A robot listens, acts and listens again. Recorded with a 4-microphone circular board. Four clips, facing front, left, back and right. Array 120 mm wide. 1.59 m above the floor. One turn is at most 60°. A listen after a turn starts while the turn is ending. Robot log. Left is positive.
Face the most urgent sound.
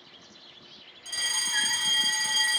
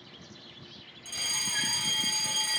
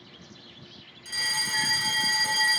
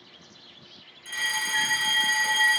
note: The fire alarm: 115° right.
cmd yaw -60
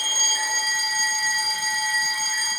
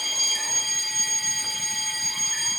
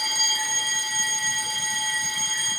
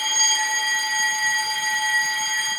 note: The fire alarm is now 70° right.
cmd yaw -60
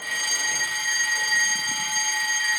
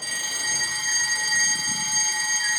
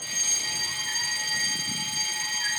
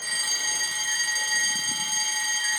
note: The fire alarm is now 15° left.
cmd yaw +15
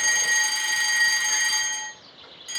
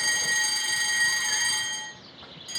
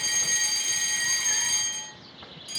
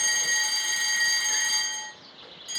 end: Facing the fire alarm, 1 to 2 m away.